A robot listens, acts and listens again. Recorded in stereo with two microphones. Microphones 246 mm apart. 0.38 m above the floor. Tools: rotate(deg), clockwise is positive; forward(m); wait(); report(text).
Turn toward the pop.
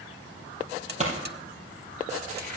rotate(30)
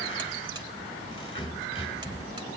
wait()
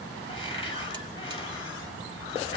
report("I heard a pop, but can't make it out now. It was about straight ahead or 120° right.")